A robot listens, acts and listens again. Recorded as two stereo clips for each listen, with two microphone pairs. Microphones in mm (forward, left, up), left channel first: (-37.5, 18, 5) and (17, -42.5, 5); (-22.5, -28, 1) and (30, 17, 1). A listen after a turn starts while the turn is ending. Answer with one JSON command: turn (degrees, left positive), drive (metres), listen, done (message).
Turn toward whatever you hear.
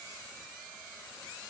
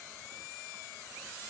{"listen": true}
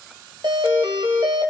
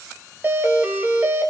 {"turn": -20}
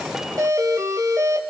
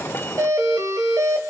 {"done": "Found it: a doorbell, straight ahead."}